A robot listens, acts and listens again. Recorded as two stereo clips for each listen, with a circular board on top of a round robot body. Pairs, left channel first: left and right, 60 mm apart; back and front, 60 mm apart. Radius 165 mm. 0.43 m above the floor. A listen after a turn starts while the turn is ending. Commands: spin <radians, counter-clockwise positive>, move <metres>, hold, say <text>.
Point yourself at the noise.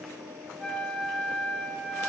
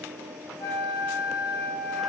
spin 3.14
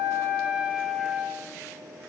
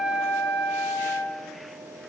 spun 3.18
say Found it: a flute, straight ahead.